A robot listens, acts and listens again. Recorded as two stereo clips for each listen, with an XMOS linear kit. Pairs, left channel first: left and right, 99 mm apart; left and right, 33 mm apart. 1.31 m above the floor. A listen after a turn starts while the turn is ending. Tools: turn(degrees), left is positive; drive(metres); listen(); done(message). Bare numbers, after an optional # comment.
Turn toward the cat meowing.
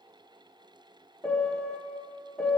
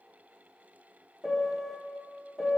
listen()
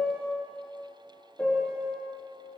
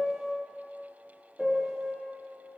listen()
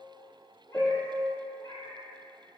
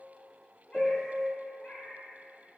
# The cat meowing: about 50° left or 130° left.
turn(50)
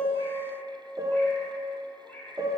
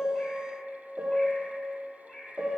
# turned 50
# So it is at 20° left.
turn(20)
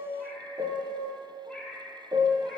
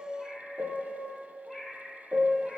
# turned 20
done("Found it: a cat meowing, straight ahead, 1 to 2 m away.")